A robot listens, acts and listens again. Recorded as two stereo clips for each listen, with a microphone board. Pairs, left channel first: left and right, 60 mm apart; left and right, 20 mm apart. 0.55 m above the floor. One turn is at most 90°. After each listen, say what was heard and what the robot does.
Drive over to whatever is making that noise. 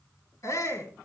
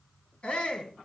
The shout: about 60° left or 120° left. Turn 60° left.
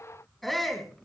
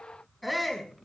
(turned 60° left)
Drive 1.0 m forward.
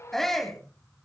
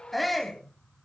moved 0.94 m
Drive 1.0 m forward.
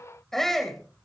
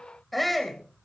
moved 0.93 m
Drive 1.0 m forward.
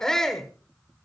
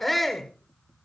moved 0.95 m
The shout is now 10° left. Turn 10° left.
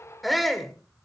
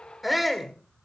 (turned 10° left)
Drive 1.0 m forward.
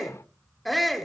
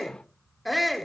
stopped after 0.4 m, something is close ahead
I am next to the shout.